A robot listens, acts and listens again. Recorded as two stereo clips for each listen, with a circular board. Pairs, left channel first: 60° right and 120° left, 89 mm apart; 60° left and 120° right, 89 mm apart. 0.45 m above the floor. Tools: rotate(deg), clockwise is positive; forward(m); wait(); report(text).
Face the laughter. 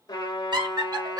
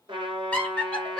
rotate(-140)
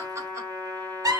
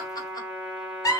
rotate(-95)
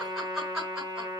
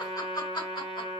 rotate(-45)
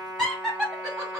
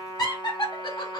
rotate(-40)
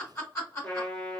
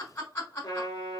report("Facing the laughter, 2 to 4 m away.")